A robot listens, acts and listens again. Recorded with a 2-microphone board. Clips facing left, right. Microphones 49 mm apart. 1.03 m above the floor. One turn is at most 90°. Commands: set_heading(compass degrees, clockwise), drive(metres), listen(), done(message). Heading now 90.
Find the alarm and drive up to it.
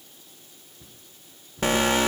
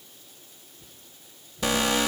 set_heading(45)
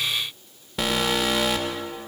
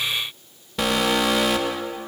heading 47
drive(1.0)
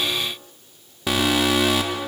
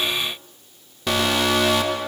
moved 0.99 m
set_heading(37)
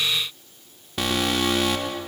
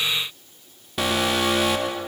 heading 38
drive(1.0)
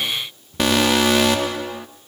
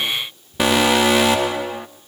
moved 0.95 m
drive(1.0)
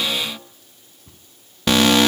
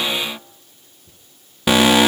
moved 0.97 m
set_heading(48)
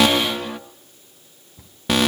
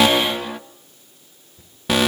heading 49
drive(1.0)
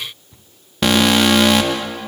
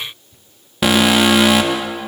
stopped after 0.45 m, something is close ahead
done("Arrived at the alarm, straight ahead.")